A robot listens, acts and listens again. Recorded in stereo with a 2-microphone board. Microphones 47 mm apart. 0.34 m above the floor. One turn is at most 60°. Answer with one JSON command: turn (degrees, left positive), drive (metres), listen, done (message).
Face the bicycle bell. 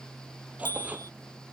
{"turn": 60}
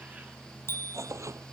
{"turn": 55}
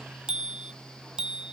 {"turn": -20}
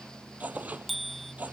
{"done": "Facing the bicycle bell."}